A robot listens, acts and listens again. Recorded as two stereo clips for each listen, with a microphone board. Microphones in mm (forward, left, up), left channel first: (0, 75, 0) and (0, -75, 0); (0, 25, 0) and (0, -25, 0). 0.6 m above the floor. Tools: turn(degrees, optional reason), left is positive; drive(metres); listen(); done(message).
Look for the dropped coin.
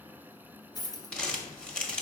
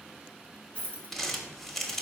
turn(degrees=25, reason="The dropped coin: about 25° left or 155° left.")
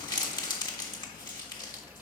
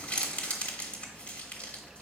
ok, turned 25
listen()
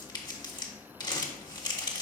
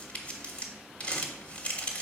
done("I heard a dropped coin, but can't make it out now. It was about straight ahead or 130° left.")